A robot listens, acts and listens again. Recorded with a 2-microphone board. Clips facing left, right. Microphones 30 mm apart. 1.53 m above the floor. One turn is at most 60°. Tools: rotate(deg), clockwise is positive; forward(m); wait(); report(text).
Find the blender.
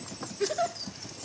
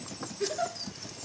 wait()
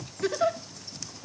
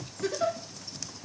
wait()
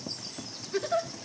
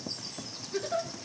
report("I can't make out a blender to turn to.")